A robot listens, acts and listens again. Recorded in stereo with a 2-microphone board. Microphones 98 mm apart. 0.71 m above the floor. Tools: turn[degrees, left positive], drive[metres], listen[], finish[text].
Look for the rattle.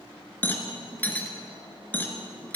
Thought: The rattle: about 15° left or 165° left.
Action: turn[15]
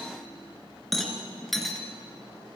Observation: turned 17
Action: finish[Facing the rattle, 2 to 4 m away.]